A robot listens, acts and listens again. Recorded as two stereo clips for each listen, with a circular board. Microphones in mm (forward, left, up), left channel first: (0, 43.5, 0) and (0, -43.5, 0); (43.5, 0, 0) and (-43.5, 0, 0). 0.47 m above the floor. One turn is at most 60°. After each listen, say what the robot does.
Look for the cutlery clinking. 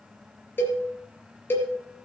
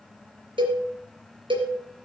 Keep listening.
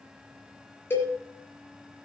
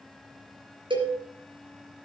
Keep listening.
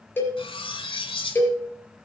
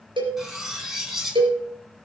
Turn 60° left.
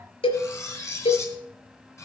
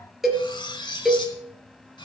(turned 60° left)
Turn 30° left.
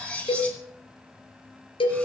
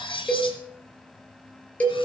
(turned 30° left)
Turn 15° left.
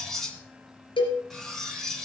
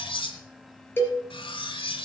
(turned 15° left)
Facing the cutlery clinking, 2 to 4 m away.